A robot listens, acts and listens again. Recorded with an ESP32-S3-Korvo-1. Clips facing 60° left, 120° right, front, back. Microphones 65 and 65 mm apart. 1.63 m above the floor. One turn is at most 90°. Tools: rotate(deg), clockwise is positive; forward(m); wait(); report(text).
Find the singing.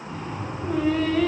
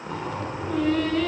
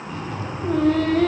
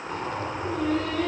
rotate(20)
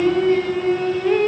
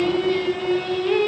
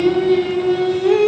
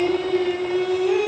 report("Found it: singing, straight ahead, 1 to 2 m away.")